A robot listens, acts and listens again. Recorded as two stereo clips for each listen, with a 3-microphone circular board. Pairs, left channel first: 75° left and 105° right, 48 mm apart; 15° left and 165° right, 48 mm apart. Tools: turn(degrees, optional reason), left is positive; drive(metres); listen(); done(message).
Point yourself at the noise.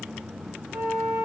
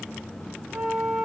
turn(degrees=-75, reason="The flute: 75° right.")
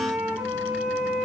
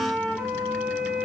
turn(degrees=-20, reason="The flute is now 20° right.")
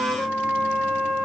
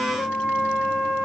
done("Found it: a flute, straight ahead, 2 to 4 m away.")